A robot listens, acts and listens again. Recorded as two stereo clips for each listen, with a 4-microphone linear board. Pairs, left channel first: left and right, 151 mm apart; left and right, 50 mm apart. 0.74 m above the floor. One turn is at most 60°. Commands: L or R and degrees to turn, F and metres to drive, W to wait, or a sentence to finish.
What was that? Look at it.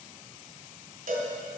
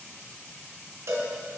R60
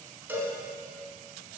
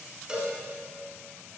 R15
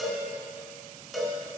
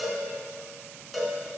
Facing the cowbell, 1 to 2 m away.